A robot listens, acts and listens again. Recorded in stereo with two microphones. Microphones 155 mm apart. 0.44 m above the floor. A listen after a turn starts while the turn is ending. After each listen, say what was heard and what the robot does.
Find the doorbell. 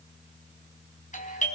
The doorbell: about 55° left or 125° left. Turn 55° left.
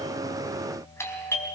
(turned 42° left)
So it is at 20° left. Turn 20° left.
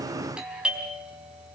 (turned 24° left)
Facing the doorbell.